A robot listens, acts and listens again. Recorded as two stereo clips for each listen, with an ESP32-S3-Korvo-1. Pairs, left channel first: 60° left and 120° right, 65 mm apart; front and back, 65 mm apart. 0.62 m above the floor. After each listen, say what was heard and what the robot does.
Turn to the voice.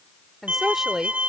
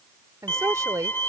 The woman speaking: 155° left. Turn 155° left.
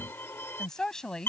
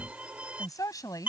The woman speaking is now 20° right. Turn 20° right.
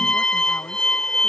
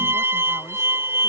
Keep listening.
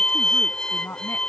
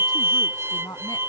Found it: a woman speaking, straight ahead.